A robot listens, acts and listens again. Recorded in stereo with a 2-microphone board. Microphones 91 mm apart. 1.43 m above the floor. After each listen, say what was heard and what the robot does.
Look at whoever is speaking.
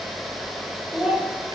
Turn 30° right.
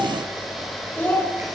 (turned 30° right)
So it is at 20° left. Turn 20° left.
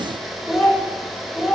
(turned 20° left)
Found it: a child speaking, straight ahead, over 4 m away.